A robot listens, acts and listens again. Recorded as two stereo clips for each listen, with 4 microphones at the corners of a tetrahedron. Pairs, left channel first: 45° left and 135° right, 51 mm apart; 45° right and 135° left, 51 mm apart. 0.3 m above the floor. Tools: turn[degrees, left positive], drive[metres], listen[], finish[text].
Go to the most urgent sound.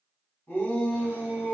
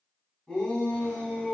Thought: The shout: 35° left.
Action: turn[35]
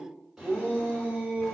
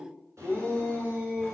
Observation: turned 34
Action: drive[1.0]
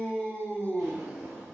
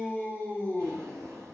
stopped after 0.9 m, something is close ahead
Action: finish[I am next to the shout.]